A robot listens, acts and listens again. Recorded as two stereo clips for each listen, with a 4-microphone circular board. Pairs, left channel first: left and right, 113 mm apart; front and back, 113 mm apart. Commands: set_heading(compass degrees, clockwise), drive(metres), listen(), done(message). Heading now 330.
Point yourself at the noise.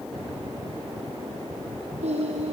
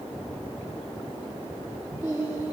set_heading(80)
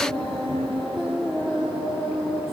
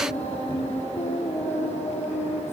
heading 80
done("Facing the singing, over 4 m away.")